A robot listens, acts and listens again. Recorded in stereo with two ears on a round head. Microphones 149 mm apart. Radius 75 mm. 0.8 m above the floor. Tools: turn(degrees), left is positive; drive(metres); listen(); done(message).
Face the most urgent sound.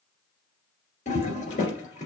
listen()
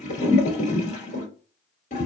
listen()
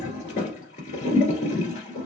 done("I can't make out anything urgent, only a toilet flushing.")